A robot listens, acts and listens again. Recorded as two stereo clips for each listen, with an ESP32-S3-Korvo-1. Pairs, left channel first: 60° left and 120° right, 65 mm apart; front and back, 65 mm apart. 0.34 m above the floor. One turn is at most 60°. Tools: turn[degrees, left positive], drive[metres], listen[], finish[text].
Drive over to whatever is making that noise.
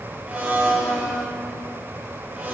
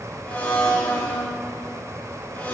Thought: The blender: 60° right.
Action: turn[-60]
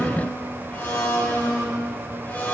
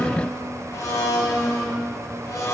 Action: drive[1.0]
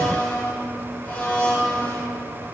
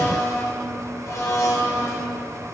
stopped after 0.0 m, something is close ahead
Action: finish[Blocked. The blender is further on, straight ahead.]